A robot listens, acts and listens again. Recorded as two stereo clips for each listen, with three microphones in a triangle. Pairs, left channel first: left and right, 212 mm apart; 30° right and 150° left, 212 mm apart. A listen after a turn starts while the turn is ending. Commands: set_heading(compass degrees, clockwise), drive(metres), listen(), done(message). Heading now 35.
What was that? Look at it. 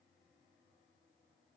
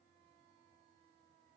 listen()
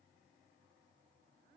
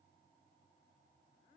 listen()
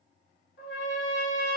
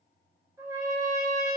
set_heading(320)
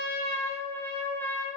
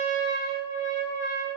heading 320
set_heading(310)
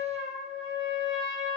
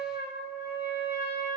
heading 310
done("Facing the trumpet, under 1 m away.")